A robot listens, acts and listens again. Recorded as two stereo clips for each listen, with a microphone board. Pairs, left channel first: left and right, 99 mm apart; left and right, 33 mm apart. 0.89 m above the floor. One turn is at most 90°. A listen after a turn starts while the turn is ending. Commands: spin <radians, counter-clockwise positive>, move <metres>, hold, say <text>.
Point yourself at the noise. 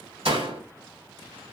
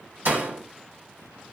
spin -1.57
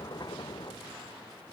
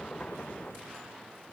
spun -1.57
say Facing where the door slam came from. I can't hear it now.